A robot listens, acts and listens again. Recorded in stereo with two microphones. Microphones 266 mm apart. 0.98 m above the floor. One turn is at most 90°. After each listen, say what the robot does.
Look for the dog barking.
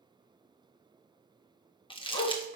Turn 90° right.
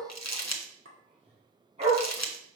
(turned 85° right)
Turn 25° right.
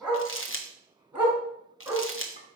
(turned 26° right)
Turn 10° right.
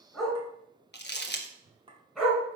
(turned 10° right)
Facing the dog barking.